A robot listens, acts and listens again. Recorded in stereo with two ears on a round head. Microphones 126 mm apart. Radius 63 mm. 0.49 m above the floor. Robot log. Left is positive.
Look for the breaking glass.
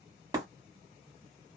note: The breaking glass: about 25° right or 155° right.
cmd yaw -25
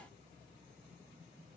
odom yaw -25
cmd idle
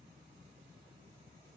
end: I heard breaking glass, but can't make it out now. It was about straight ahead or 130° right.